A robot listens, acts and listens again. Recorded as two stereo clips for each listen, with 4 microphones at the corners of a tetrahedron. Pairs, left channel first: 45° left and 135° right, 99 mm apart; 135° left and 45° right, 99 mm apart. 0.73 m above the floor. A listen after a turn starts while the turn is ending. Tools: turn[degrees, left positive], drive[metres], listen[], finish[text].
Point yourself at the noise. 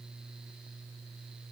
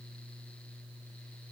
Action: listen[]
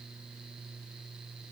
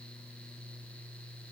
Action: listen[]
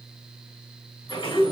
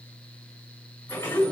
Thought: The sliding door: 70° left.
Action: turn[70]
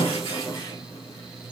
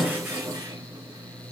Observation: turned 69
Action: finish[Facing the sliding door, 1 to 2 m away.]